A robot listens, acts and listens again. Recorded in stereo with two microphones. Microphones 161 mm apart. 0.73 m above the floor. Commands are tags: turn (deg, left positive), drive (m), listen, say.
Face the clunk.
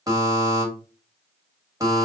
<listen/>
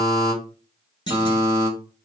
<turn deg="30"/>
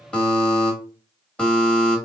<listen/>
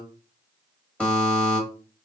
<say>I heard a clunk, but can't make it out now. It was about straight ahead or 120° left.</say>